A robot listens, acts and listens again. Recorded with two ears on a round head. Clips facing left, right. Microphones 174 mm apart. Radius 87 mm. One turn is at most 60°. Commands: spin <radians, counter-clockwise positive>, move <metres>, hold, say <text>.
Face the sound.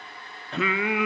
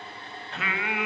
spin 1.05
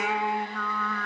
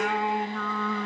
spin -0.17
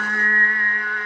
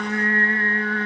spin -0.52
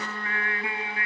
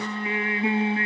spin -0.44
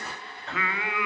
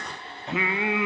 spin -0.35
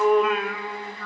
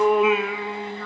say Found it: singing, straight ahead, 1 to 2 m away.